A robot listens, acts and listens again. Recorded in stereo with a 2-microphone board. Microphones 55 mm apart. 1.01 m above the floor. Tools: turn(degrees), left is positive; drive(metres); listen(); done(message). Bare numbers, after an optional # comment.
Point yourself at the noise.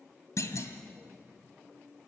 # The clunk: about 65° left or 115° left.
turn(65)
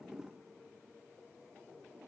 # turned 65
listen()
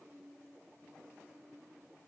done("I heard a clunk, but can't make it out now. It was about straight ahead or 50° left.")